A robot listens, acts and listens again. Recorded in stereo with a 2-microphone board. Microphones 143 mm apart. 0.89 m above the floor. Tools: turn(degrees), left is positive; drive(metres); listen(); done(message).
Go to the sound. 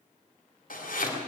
turn(degrees=70)
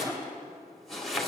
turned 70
drive(metres=1.0)
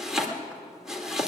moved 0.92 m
drive(metres=1.0)
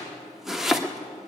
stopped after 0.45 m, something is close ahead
done("I am next to the chopping.")